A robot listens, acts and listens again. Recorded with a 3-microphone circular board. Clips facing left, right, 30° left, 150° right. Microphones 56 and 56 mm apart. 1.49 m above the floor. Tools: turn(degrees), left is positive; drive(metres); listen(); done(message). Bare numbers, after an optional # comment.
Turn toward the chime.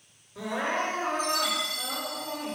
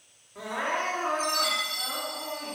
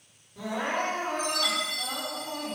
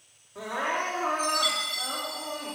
# The chime: 60° right.
turn(-60)
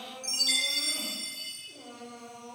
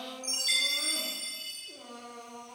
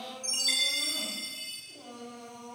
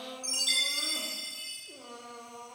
# The chime is now 30° right.
turn(-30)
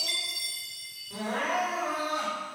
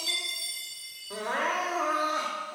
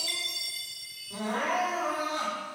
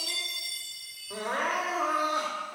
# The chime is now 10° right.
turn(-10)
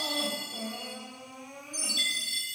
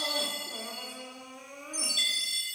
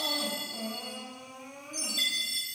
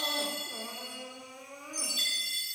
done("Facing the chime.")